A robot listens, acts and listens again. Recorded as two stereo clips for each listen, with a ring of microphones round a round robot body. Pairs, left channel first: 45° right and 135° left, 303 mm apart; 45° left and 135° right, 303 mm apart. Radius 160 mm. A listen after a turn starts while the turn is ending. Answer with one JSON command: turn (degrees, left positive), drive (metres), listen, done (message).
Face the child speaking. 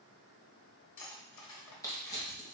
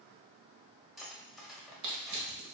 {"listen": true}
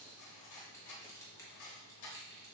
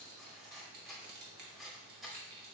{"listen": true}
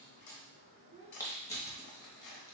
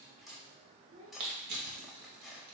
{"turn": -160}
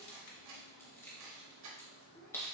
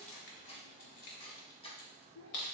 {"turn": 35}
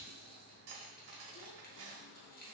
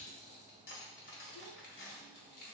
{"listen": true}
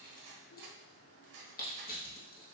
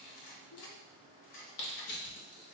{"listen": true}
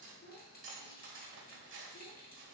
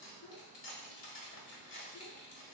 {"turn": 10}
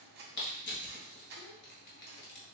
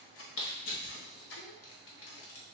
{"listen": true}
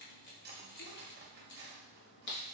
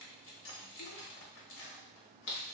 {"listen": true}
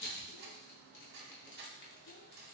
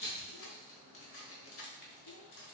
{"done": "Facing where the child speaking came from. I can't hear it now."}